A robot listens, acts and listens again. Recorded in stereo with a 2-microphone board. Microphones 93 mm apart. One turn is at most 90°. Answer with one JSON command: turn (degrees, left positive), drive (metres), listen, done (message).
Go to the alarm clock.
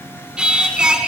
{"listen": true}
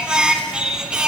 {"listen": true}
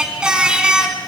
{"done": "I can't make out an alarm clock to turn to."}